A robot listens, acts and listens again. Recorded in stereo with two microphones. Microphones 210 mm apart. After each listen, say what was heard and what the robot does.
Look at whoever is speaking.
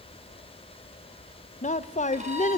The woman speaking: about 35° left or 145° left. Turn 35° left.
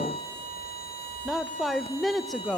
Found it: a woman speaking, straight ahead, under 1 m away.